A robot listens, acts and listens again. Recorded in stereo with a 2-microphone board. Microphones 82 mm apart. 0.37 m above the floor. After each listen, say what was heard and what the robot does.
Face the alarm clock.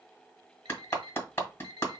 The alarm clock: about 70° right or 110° right. Turn 70° right.
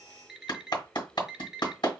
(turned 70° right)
Facing the alarm clock, 1 to 2 m away.